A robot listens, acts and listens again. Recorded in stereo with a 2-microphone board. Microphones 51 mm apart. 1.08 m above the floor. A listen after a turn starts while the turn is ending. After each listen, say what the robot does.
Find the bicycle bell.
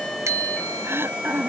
Turn 90° right.
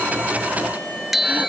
Facing the bicycle bell.